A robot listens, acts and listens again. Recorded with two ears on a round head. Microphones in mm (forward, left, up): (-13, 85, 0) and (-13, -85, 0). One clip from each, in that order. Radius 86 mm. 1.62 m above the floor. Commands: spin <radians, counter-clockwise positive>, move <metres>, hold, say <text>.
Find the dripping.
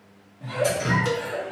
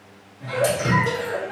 spin -0.70
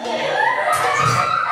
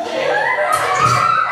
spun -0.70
hold
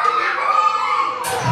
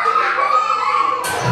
say Found it: dripping, straight ahead.